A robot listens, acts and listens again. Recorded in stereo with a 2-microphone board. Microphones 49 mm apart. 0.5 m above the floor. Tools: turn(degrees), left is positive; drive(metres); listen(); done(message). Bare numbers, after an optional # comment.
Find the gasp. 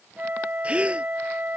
# The gasp: about 25° right or 155° right.
turn(-25)
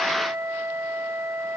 listen()
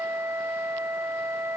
done("I heard a gasp, but can't make it out now. It was about straight ahead or 130° right.")